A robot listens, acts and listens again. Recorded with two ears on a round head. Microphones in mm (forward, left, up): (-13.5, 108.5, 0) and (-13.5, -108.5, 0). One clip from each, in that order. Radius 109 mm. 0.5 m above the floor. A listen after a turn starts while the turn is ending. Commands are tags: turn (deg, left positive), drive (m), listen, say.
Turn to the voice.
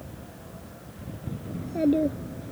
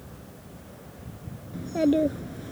<turn deg="-40"/>
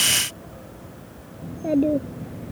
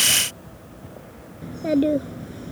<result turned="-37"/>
<turn deg="-100"/>
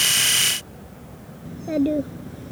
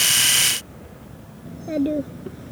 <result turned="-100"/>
<say>Facing the child speaking.</say>